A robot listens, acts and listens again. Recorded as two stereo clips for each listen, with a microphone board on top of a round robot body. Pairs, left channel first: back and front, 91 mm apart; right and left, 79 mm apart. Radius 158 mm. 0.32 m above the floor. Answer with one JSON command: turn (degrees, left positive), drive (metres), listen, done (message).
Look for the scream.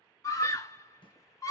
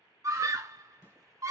{"turn": 130}
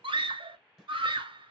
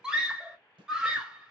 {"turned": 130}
{"turn": 10}
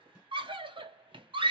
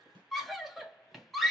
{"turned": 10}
{"done": "Found it: a scream, straight ahead, 1 to 2 m away."}